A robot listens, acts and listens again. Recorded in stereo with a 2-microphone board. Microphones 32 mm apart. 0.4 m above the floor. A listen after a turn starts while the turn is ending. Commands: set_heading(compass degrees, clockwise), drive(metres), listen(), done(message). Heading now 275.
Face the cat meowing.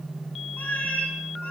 set_heading(215)
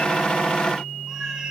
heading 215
listen()
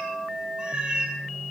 set_heading(250)
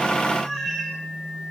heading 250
done("Found it: a cat meowing, straight ahead, 2 to 4 m away.")